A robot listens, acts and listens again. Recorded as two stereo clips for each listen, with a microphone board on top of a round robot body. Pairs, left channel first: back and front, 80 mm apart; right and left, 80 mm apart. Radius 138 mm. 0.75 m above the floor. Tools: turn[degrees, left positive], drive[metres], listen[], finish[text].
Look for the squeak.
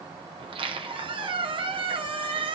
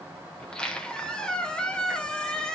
Thought: The squeak: 10° right.
Action: turn[-10]
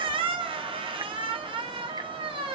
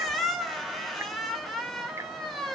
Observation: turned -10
Action: finish[Facing the squeak, 1 to 2 m away.]